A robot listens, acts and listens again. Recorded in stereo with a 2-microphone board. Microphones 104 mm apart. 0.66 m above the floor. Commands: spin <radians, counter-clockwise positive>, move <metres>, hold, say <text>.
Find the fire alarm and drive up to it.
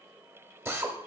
hold
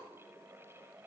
hold
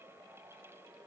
say I can't make out a fire alarm, only a drill.